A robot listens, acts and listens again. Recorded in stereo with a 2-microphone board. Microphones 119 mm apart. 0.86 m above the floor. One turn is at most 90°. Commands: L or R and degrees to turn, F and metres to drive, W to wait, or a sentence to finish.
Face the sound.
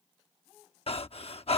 L55
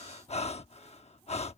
L70
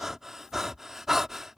Facing the breathing.